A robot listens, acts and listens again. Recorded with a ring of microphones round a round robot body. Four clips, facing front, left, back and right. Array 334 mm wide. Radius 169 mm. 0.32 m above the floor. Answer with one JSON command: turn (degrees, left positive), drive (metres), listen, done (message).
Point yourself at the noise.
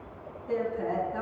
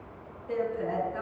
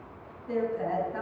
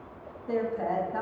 {"turn": -95}
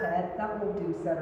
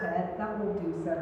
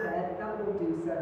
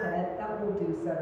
{"turn": -10}
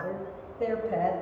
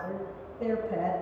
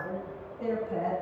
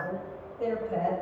{"turn": -10}
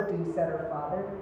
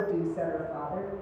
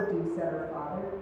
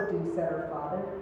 {"turn": -15}
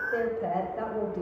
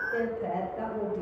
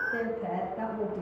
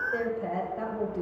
{"turn": -10}
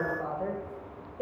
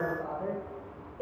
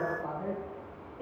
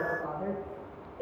{"done": "Facing the woman speaking."}